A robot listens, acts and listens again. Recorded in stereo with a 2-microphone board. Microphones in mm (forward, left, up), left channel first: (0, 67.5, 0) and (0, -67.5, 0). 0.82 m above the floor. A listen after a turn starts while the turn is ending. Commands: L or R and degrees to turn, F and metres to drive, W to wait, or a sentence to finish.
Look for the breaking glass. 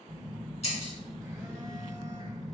L50
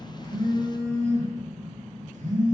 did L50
W
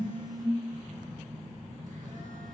I heard breaking glass, but can't make it out now. It was about straight ahead or 80° left.